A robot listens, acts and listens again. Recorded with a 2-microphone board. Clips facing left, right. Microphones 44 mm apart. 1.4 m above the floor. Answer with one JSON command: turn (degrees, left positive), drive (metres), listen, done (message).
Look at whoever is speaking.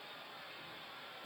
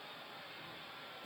{"listen": true}
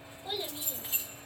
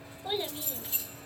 {"turn": -30}
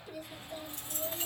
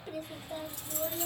{"turn": -115}
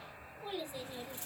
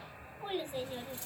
{"turn": -50}
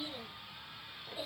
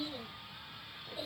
{"turn": 20}
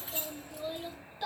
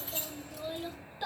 {"done": "Found it: a child speaking, straight ahead."}